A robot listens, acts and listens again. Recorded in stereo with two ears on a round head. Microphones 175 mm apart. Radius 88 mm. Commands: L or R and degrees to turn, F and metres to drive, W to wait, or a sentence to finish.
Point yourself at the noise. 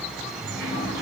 R30
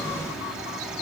W
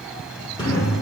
L25
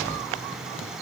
W
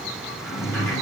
L15
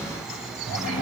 Found it: a sliding door, straight ahead, over 4 m away.